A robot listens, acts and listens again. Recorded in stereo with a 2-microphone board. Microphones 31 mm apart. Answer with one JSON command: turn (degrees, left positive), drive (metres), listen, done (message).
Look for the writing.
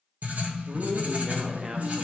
{"turn": -65}
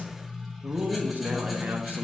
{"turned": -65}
{"done": "Facing the writing."}